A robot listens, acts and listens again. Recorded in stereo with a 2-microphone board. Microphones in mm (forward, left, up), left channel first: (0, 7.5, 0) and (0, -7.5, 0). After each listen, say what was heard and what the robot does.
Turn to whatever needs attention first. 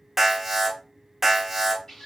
Turn 30° right.
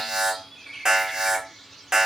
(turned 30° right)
So it is at 140° right. Turn 140° right.
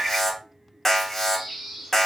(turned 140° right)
The alarm is now 20° left. Turn 20° left.
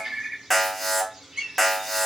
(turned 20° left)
Facing the alarm, 1 to 2 m away.